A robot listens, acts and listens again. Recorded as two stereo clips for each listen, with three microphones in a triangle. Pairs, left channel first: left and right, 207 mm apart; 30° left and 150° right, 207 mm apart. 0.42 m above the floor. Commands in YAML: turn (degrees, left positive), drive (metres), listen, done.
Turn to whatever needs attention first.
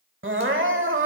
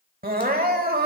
turn: -105
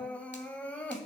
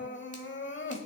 turn: 10
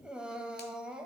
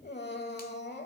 done: "Found it: crying, straight ahead."